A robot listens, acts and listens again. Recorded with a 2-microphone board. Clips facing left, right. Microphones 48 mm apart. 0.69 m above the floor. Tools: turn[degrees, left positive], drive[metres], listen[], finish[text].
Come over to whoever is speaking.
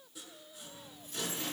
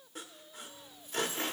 Action: listen[]
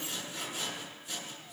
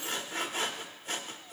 Action: listen[]
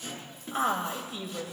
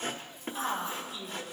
Thought: The woman speaking: about 70° left or 110° left.
Action: turn[70]
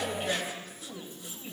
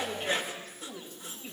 Action: drive[1.0]
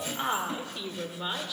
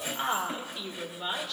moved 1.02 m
Thought: The woman speaking is now 10° left.
Action: turn[10]
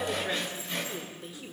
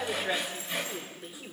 Action: drive[1.0]
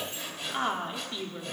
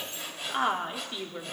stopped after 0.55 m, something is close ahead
Thought: The woman speaking is now 10° right.
Action: turn[-10]
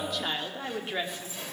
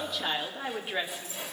Action: finish[I am next to the woman speaking.]